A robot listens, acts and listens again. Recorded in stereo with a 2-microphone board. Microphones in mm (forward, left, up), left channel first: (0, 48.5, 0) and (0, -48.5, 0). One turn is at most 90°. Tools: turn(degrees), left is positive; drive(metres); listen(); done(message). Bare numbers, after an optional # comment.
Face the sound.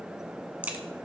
# The crack: about 15° right or 165° right.
turn(-15)
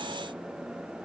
listen()
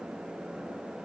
done("I heard a crack, but can't make it out now. It was about straight ahead or 150° right.")